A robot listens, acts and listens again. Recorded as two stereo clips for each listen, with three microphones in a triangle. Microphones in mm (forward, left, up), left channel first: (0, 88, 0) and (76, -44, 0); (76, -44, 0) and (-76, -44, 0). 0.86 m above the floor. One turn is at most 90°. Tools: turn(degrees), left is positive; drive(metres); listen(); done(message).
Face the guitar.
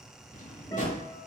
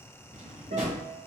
turn(degrees=90)
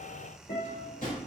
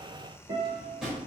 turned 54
turn(degrees=90)
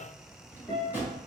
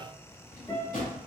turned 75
turn(degrees=50)
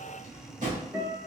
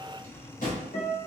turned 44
done("Facing the guitar, 1 to 2 m away.")